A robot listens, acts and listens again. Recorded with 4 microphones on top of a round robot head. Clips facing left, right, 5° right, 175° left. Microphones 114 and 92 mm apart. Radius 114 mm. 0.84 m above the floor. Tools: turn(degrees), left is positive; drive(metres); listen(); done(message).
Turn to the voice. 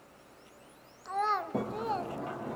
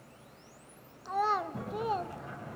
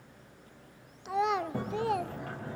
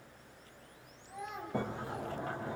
done("Found it: a child speaking, straight ahead.")